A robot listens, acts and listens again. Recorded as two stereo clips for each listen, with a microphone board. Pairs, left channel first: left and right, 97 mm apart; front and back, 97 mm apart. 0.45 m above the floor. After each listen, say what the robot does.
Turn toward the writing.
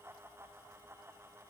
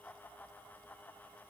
Keep listening.
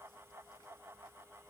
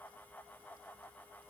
Keep listening.
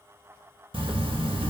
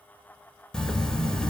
Turn 80° right.
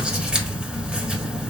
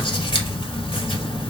Turn 10° right.
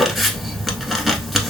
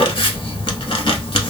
Found it: writing, straight ahead, under 1 m away.